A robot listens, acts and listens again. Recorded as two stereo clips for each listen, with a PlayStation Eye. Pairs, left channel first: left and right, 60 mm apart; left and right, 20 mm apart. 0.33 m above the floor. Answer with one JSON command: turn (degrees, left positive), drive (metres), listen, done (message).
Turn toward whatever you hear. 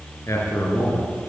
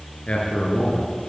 {"turn": 55}
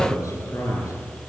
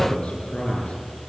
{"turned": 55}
{"turn": 65}
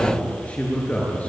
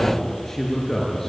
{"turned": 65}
{"turn": 25}
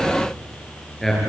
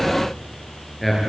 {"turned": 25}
{"done": "Facing the man speaking."}